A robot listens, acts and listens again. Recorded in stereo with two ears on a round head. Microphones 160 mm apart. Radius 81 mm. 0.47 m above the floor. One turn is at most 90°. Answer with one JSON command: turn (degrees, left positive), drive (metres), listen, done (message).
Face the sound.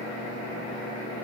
{"listen": true}
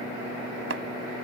{"turn": -70}
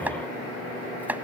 {"turn": -10}
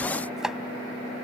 {"done": "Found it: chopping, straight ahead."}